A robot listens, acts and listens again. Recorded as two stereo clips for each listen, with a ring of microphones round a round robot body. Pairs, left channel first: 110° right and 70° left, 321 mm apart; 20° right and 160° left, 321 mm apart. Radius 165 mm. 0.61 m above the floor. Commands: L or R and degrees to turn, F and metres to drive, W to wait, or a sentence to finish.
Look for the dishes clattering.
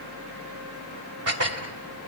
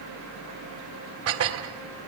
L110
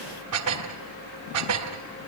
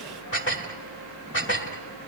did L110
L30
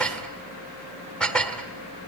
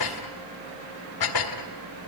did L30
R25
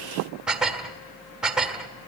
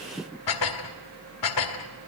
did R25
R20
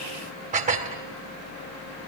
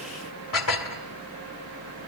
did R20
Facing the dishes clattering.